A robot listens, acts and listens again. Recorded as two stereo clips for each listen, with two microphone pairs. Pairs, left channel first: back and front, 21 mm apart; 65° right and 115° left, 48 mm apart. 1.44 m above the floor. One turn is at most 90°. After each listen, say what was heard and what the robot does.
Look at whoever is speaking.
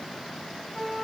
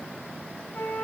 Keep listening.
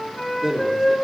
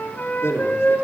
The man speaking: 65° right. Turn 65° right.
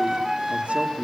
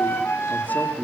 The man speaking is now 10° right. Turn 10° right.
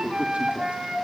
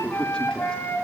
The man speaking is now 10° left. Turn 10° left.
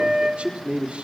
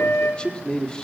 The man speaking is now 10° left. Turn 10° left.
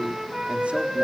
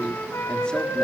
Keep listening.
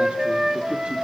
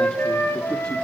Keep listening.
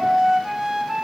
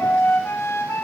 Facing where the man speaking came from. I can't hear it now.